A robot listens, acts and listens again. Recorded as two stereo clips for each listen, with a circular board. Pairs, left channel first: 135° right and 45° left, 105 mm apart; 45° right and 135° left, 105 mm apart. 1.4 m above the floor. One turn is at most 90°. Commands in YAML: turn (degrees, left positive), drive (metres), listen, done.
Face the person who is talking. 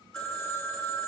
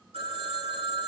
listen: true
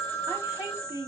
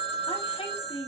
turn: -20
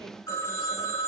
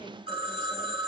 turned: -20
listen: true
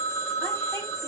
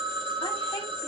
listen: true
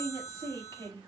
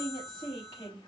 done: "Found it: a woman speaking, straight ahead, 2 to 4 m away."